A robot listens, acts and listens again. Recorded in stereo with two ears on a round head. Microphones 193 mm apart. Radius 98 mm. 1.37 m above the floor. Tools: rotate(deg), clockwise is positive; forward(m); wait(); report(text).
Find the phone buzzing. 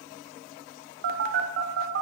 rotate(45)
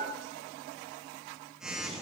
report("Facing the phone buzzing, under 1 m away.")